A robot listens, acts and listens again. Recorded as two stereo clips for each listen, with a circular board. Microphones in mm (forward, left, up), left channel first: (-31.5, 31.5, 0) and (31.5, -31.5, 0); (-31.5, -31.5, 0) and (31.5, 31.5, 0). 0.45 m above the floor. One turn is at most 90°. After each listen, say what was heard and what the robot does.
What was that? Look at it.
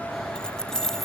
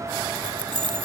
The keys jangling: 50° left. Turn 50° left.
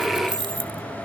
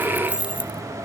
The keys jangling is now 30° right. Turn 30° right.
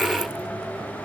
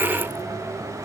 Keep listening.
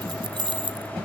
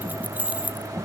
The keys jangling is now 30° right. Turn 30° right.
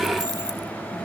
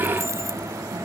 Keep listening.
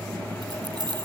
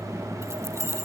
The keys jangling is now 15° right. Turn 15° right.
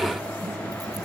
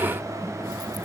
Keep listening.
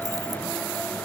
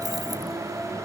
Keep listening.
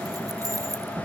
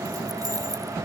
Facing where the keys jangling came from. I can't hear it now.